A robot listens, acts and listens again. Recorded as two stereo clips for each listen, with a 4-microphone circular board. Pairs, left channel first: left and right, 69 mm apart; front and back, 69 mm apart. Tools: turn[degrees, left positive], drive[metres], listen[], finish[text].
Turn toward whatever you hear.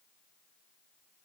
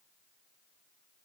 Action: listen[]
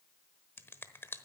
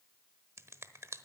Thought: The finger snap: 140° left.
Action: turn[140]
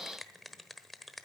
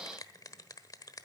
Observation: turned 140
Action: finish[Facing the finger snap, 1 to 2 m away.]